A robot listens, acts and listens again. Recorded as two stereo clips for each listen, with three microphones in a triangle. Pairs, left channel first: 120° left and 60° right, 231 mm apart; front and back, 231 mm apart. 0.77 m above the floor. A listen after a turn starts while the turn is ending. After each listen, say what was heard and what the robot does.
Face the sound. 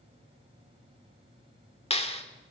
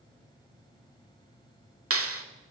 The clap: straight behind. Turn 180° left.
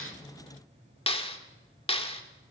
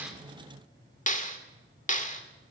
The clap is now 55° left. Turn 55° left.
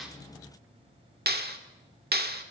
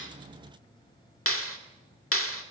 The clap is now 15° right. Turn 15° right.
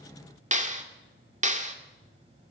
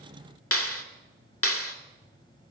Found it: a clap, straight ahead, 1 to 2 m away.